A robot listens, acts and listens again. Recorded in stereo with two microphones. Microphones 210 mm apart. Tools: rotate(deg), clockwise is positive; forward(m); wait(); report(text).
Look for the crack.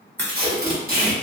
rotate(-30)
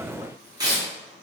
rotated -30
wait()
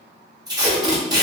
report("I heard a crack, but can't make it out now. It was about 20° right or 140° left.")